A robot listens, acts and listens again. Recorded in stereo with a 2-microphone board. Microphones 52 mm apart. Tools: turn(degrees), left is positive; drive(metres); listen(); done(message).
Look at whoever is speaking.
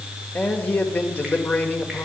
turn(degrees=35)
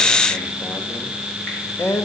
turn(degrees=105)
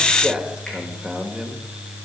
turn(degrees=-25)
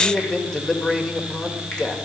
turn(degrees=15)
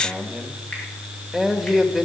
done("Facing the man speaking.")